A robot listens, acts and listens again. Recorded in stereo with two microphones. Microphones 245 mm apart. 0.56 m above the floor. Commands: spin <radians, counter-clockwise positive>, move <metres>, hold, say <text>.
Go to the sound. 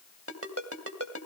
spin -1.13
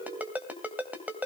move 1.0
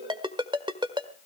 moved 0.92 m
spin -0.35
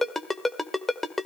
move 1.0
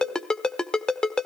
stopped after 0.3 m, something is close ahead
say Arrived at the ringtone, straight ahead.